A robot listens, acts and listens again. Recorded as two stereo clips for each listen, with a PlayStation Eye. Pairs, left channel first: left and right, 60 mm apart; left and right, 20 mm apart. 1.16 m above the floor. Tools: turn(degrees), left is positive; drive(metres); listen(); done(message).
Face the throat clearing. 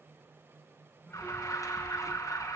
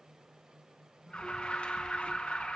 listen()
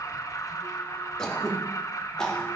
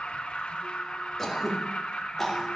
turn(degrees=30)
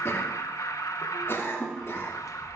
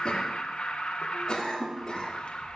turn(degrees=140)
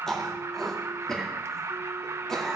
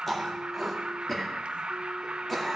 turn(degrees=10)
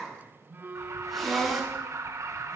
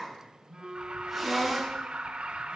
done("Found it: throat clearing, straight ahead, 2 to 4 m away.")